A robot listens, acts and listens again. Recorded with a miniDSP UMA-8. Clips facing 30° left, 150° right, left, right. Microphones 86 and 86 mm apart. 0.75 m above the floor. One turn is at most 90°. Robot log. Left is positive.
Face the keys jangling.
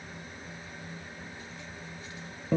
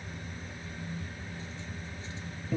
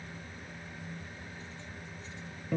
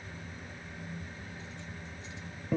cmd idle
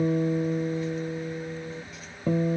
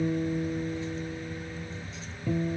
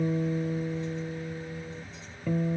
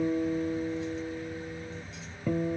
cmd idle
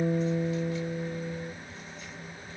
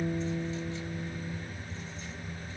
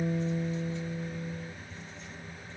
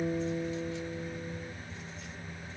end: I can't make out keys jangling to turn to.